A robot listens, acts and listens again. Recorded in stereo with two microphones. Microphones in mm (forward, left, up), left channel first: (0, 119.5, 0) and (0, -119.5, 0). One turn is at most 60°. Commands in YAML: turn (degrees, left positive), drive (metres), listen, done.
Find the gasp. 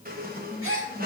turn: -60
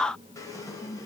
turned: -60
listen: true
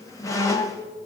done: "I heard a gasp, but can't make it out now. It was about straight ahead or 60° right."